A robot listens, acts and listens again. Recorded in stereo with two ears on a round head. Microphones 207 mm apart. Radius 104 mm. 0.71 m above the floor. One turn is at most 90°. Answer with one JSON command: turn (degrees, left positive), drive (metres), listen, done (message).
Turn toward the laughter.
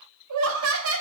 {"turn": -60}
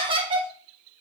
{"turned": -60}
{"turn": -25}
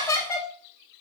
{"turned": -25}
{"turn": 15}
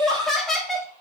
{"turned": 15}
{"done": "Found it: laughter, straight ahead."}